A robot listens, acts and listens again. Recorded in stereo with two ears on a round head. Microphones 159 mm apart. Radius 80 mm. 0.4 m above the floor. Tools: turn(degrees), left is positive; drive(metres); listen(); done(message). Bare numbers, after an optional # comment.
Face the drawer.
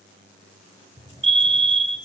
turn(30)
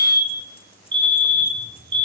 # So it is at 140° left.
turn(140)
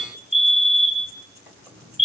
# The drawer is now 10° right.
turn(-10)
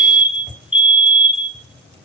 done("Facing the drawer, 2 to 4 m away.")